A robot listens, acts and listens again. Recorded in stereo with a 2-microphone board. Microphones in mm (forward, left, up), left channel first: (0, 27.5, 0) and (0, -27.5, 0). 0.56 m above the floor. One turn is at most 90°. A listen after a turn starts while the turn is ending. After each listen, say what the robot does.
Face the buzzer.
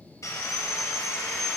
Keep listening.
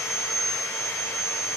Keep listening.
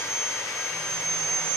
I can't make out a buzzer, only sawing.